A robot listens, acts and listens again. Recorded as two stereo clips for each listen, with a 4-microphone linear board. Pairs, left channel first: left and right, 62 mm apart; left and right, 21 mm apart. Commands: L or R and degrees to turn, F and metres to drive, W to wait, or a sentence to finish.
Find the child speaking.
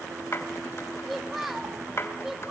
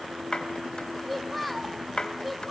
R30
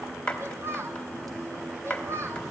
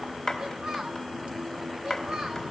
R135
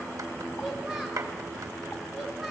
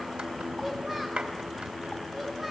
W
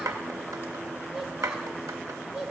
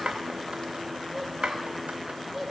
R10
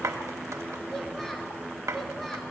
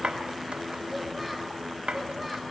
W
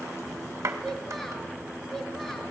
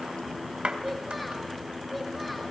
Facing the child speaking.